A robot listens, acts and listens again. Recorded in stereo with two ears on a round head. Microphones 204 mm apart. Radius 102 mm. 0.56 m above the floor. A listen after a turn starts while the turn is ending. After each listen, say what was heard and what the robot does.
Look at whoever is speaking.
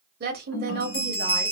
The woman speaking: about 45° right or 135° right. Turn 45° right.
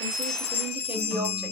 Keep listening.
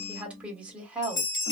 Found it: a woman speaking, straight ahead, 1 to 2 m away.